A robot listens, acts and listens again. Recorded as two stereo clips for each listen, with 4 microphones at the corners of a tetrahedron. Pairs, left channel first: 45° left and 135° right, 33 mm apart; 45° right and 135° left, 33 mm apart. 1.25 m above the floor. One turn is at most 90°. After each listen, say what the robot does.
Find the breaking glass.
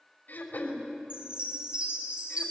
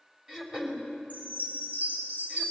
Keep listening.
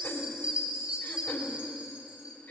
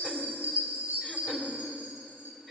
Keep listening.
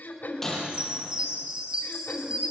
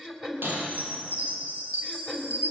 Turn 90° left.
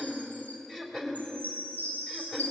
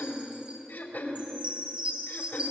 Turn 35° left.
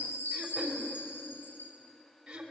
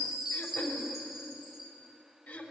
Facing where the breaking glass came from. I can't hear it now.